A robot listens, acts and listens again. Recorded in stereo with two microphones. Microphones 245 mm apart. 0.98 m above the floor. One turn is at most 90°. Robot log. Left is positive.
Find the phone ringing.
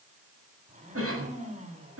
cmd idle
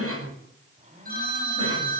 note: The phone ringing: about 35° right or 145° right.
cmd yaw -35
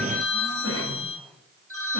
note: So it is at 110° right.
cmd yaw -90
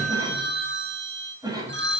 note: The phone ringing is now 50° right.
cmd yaw -50
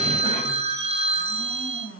note: The phone ringing is now 25° right.
cmd yaw -25
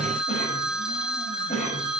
end: Facing the phone ringing, over 4 m away.